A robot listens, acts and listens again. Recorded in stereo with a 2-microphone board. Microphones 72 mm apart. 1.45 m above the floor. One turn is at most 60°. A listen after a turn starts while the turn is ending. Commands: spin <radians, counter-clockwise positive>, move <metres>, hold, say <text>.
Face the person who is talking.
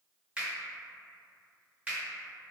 hold
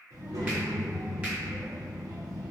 spin -1.05
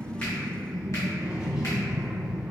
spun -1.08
spin -0.26
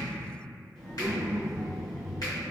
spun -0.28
say Found it: a child speaking, straight ahead.